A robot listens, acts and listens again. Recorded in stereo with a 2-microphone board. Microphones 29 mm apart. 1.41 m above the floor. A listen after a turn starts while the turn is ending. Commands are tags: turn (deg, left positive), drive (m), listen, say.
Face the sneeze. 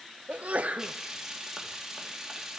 <turn deg="-55"/>
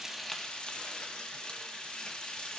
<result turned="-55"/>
<listen/>
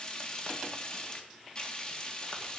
<say>I heard a sneeze, but can't make it out now. It was about straight ahead or 70° right.</say>